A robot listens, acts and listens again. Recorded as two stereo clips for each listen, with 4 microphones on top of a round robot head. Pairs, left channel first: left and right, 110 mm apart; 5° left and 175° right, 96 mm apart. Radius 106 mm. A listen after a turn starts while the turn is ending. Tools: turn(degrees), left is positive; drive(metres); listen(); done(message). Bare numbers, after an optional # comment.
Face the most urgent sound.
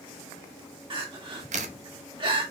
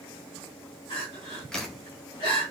# The crying: 45° right.
turn(-45)
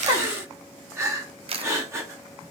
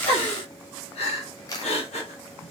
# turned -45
# The crying is now 25° right.
turn(-25)
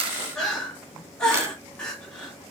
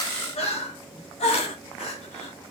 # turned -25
done("Found it: crying, straight ahead.")